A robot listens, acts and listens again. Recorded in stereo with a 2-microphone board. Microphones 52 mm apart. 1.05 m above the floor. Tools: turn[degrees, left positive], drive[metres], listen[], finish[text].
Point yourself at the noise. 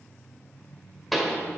Action: turn[30]
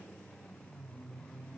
Action: listen[]
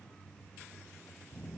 Action: finish[I heard a pop, but can't make it out now. It was about 30° right or 150° left.]